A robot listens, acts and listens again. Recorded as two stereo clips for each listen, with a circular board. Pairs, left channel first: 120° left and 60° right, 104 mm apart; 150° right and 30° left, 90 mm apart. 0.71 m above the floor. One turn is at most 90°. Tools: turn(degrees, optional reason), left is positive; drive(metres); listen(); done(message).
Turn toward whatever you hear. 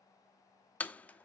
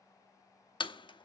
turn(degrees=-90, reason="The door slam: 165° right.")
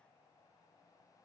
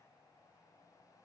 turn(degrees=-75, reason="Nothing new. It was at 75° right.")
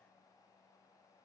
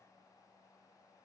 done("I heard a door slam from this way, but can't make it out now.")